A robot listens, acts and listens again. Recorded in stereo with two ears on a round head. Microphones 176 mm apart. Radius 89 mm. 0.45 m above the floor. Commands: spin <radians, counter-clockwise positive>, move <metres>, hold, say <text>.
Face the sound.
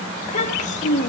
spin 0.70
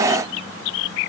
hold
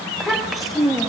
say Facing the child speaking, 1 to 2 m away.